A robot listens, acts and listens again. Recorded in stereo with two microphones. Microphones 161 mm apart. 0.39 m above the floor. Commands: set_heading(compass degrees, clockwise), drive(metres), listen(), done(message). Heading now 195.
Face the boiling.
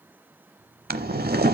set_heading(285)
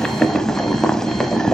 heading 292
done("Found it: boiling, straight ahead.")